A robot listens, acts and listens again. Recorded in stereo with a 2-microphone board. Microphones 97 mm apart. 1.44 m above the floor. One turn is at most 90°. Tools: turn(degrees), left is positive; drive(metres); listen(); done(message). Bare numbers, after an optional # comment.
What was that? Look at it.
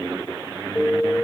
# The alarm: about 15° left or 165° left.
turn(15)
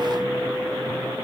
done("Facing the alarm.")